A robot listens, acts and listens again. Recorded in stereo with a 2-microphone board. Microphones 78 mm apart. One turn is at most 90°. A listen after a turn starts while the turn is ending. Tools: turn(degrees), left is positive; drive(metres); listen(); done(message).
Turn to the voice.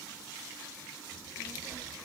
turn(degrees=-30)
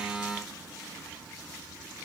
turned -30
turn(degrees=-90)
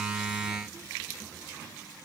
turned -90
turn(degrees=-50)
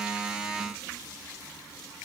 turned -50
done("Facing the child speaking, over 4 m away.")